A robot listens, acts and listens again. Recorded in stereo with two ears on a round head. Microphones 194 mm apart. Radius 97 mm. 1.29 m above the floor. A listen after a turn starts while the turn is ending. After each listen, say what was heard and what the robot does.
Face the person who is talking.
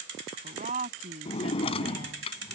The woman speaking: about 35° right or 145° right. Turn 35° right.
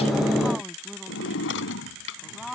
Found it: a woman speaking, straight ahead.